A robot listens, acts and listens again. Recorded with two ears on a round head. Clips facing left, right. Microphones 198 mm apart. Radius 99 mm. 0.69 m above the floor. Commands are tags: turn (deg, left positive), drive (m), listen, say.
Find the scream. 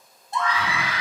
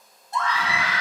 <turn deg="30"/>
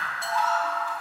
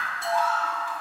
<turn deg="-15"/>
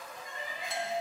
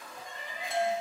<say>Found it: a scream, straight ahead, 1 to 2 m away.</say>